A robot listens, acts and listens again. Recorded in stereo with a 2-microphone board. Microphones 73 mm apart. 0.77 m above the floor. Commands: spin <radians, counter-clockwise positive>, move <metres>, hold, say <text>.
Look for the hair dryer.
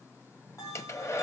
spin 0.70
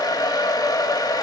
spin 1.66
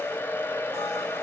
spin 0.61
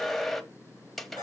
say Found it: a hair dryer, straight ahead, 1 to 2 m away.